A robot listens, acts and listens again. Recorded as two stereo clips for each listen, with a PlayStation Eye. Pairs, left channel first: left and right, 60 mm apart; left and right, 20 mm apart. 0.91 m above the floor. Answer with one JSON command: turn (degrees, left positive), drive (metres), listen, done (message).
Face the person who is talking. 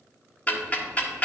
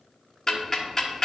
{"listen": true}
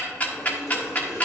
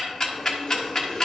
{"listen": true}
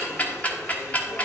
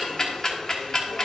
{"done": "I can't make out anyone speaking to turn to."}